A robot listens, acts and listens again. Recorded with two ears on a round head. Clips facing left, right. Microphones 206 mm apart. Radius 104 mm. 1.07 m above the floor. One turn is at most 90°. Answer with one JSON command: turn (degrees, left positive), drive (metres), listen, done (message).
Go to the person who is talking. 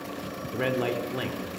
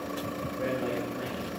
{"turn": 90}
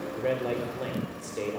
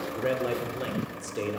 {"turn": -15}
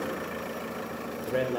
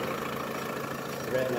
{"drive": 1.0}
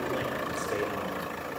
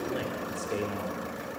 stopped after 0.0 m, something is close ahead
{"listen": true}
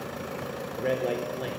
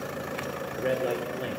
{"done": "Something is in my way. I am facing the man speaking but have not reached it."}